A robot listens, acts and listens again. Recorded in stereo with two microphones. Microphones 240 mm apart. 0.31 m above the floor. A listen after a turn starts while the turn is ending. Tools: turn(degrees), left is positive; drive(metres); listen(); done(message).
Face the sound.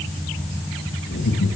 turn(degrees=90)
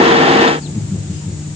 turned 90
done("Found it: laughter, straight ahead, over 4 m away.")